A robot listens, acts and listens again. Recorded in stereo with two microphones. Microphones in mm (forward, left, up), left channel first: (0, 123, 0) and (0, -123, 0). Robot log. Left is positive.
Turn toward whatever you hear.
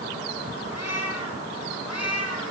cmd yaw +90
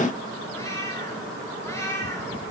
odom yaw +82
note: So it is at 10° left.
cmd yaw +10
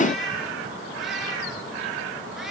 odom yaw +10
end: Found it: a cat meowing, straight ahead, over 4 m away.